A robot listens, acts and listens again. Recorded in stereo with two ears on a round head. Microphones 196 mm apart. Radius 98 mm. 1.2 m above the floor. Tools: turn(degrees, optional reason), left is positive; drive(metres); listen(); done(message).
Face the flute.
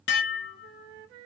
turn(degrees=-60, reason="The flute: about 60° right or 120° right.")
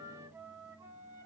turn(degrees=-15, reason="So it is at 15° right.")
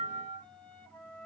done("Facing the flute, under 1 m away.")